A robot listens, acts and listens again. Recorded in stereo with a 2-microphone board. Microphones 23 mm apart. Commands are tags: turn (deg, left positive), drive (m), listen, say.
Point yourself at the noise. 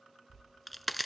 <turn deg="30"/>
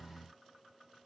<listen/>
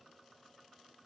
<say>I heard a crack, but can't make it out now. It was about 30° right or 150° left.</say>